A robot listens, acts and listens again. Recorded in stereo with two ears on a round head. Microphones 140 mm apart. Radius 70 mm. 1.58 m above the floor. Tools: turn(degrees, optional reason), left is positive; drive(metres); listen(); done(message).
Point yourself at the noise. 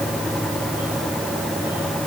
listen()
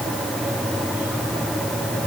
listen()
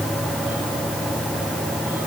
done("I can't make out anything.")